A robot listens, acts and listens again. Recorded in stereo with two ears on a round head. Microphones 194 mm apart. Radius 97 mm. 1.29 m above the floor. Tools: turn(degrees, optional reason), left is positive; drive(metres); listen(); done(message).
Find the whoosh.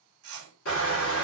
turn(degrees=-75, reason="The whoosh: about 75° right or 105° right.")
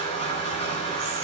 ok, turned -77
listen()
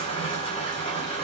listen()
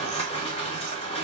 done("I heard a whoosh, but can't make it out now. It was about 5° left or 30° right.")